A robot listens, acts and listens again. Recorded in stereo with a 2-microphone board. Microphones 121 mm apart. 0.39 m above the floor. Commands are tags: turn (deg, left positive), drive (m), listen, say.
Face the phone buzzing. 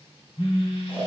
<turn deg="60"/>
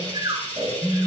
<turn deg="15"/>
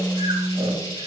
<say>Facing the phone buzzing, 2 to 4 m away.</say>